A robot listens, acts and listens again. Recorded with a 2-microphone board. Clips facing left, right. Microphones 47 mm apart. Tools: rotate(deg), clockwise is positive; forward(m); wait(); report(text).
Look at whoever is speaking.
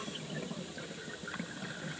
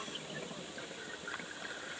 wait()
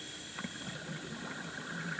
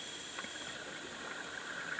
wait()
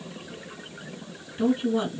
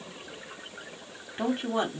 rotate(50)
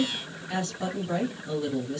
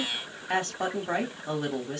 rotate(70)
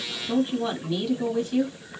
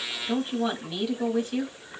rotate(10)
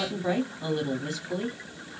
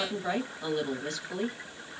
report("Facing the woman speaking.")